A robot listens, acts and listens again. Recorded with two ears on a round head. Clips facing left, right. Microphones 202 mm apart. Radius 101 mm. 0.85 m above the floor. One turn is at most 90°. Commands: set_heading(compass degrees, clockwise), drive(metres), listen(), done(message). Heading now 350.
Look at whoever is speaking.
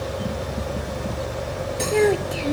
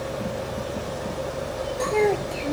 set_heading(320)
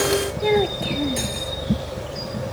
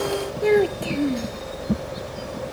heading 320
set_heading(335)
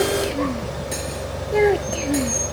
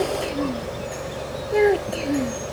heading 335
done("Facing the child speaking.")